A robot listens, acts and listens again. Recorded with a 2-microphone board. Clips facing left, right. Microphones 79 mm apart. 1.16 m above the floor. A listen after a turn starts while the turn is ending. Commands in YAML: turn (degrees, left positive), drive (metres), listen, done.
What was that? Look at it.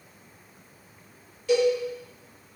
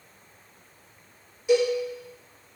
turn: -15
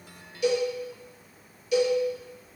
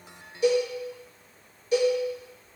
turn: -150
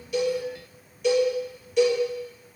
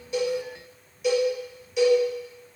done: "Facing the cowbell."